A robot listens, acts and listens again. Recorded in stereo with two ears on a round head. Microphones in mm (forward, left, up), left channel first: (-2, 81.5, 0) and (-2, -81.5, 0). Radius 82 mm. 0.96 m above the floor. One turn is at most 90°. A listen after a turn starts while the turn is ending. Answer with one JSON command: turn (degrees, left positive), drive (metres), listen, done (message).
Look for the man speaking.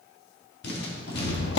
{"listen": true}
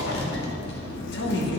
{"turn": 65}
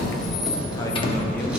{"listen": true}
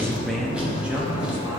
{"turn": -15}
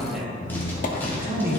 {"turn": -10}
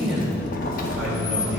{"done": "Facing the man speaking."}